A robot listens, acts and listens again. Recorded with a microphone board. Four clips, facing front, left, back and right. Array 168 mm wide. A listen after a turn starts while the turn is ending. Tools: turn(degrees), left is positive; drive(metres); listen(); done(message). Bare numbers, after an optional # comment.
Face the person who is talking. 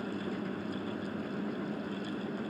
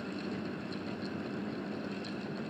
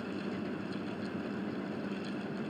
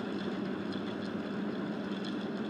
listen()
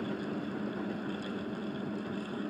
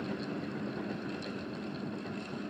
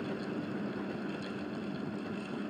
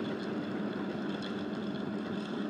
listen()
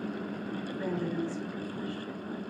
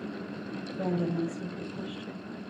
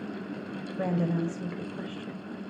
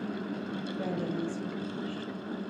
# The woman speaking: 165° left.
turn(165)
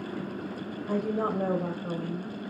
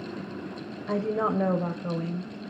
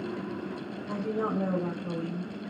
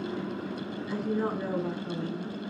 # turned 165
# The woman speaking is now 75° left.
turn(75)
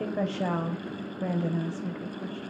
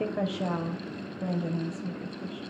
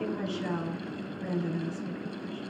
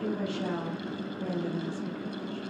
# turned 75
# The woman speaking is now 20° left.
turn(20)
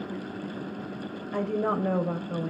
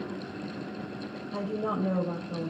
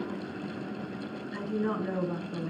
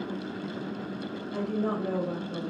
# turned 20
done("Found it: a woman speaking, straight ahead, over 4 m away.")